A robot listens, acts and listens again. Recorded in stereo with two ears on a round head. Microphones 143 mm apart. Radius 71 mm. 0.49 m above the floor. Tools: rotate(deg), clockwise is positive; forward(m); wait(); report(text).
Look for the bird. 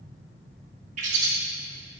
rotate(50)
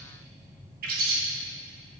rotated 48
rotate(75)
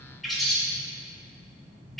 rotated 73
report("Facing the bird, under 1 m away.")